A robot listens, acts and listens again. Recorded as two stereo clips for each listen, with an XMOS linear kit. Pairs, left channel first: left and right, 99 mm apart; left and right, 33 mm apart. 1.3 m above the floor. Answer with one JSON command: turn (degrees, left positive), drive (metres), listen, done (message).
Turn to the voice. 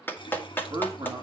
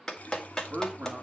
{"turn": -35}
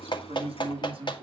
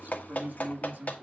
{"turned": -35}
{"turn": -115}
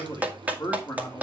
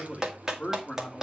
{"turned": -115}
{"turn": 30}
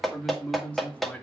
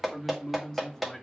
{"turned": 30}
{"turn": 10}
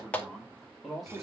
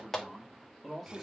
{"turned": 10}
{"done": "Facing the man speaking, 2 to 4 m away."}